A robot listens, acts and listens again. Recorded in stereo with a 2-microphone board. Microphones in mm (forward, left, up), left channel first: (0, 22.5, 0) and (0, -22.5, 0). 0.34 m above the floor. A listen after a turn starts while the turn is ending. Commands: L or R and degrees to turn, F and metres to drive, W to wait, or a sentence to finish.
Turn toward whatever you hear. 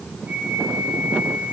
R40
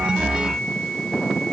Found it: a flute, straight ahead.